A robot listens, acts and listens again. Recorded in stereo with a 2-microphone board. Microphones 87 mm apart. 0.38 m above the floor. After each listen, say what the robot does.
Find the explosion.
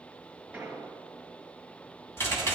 Turn 15° right.
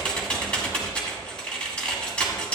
Keep listening.
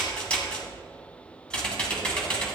I heard an explosion, but can't make it out now. It was about straight ahead or 150° right.